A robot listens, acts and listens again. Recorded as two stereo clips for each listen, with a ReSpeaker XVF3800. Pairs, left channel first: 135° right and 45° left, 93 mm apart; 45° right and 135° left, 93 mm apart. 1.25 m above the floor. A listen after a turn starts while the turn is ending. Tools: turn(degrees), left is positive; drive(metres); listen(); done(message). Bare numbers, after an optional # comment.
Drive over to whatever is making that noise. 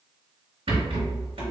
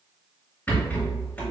# The rattle: 30° left.
turn(30)
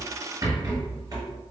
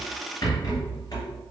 drive(1.0)
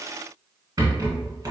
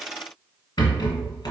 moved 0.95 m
drive(1.0)
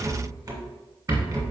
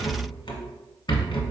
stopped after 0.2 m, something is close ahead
done("Arrived at the rattle, straight ahead.")